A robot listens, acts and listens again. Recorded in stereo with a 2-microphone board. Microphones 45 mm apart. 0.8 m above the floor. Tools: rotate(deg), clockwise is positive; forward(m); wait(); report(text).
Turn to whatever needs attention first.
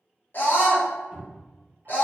rotate(-45)
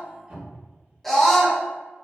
report("Facing the scream, under 1 m away.")